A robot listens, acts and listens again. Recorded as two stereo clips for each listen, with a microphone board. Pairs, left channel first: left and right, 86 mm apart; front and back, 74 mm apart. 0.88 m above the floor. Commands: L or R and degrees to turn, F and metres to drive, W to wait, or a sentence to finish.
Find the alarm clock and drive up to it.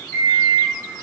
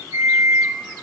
L145
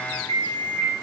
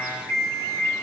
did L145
L40
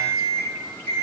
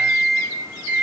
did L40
L15
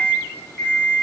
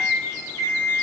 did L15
F1.0
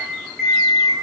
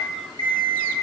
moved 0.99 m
F1.0
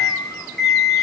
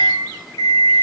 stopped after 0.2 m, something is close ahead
L10
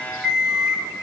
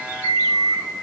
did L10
Arrived at the alarm clock, straight ahead.